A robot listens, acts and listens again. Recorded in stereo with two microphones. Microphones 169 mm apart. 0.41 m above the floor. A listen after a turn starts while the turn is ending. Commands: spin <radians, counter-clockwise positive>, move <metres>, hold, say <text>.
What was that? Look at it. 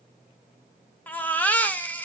spin 0.52
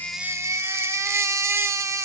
spin -0.35
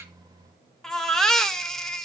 say Facing the baby crying.